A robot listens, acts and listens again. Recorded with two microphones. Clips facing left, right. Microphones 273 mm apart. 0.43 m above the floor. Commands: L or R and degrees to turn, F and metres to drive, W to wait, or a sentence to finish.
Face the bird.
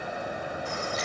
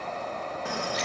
R75
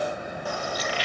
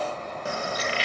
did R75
R30
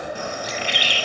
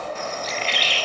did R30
L15
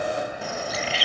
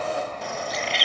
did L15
Found it: a bird, straight ahead.